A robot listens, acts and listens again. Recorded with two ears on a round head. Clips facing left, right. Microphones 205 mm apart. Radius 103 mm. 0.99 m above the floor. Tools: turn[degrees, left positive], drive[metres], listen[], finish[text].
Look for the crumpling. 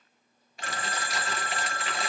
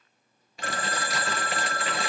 Thought: The crumpling: about 70° right or 110° right.
Action: turn[-70]
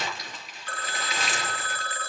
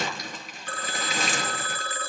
Thought: So it is at 40° right.
Action: turn[-40]
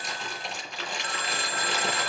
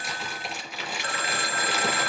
Action: finish[Facing the crumpling, over 4 m away.]